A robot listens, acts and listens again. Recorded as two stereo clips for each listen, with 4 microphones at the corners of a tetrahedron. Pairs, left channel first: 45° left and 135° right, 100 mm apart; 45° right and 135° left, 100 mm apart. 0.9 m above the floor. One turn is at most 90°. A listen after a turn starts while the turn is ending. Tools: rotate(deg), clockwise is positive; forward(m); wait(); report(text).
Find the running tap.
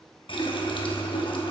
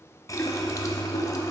rotate(-15)
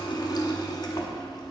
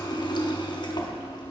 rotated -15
report("Found it: a running tap, straight ahead.")